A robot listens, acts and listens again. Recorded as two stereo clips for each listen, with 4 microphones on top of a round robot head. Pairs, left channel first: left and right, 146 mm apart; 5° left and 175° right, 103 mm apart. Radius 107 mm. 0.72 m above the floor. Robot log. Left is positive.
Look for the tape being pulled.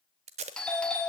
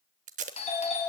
note: The tape being pulled: 145° right.
cmd yaw -145
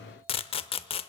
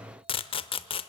note: The tape being pulled is now 40° left.
cmd yaw +40
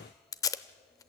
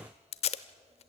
note: The tape being pulled is now 25° left.
cmd yaw +25
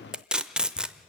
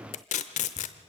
end: Facing the tape being pulled, under 1 m away.